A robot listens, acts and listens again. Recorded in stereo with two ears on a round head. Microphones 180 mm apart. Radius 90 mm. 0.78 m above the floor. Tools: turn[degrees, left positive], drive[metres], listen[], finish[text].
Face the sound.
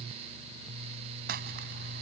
Thought: The crumpling: about 50° right or 130° right.
Action: turn[-50]
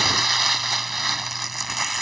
Action: finish[Found it: crumpling, straight ahead.]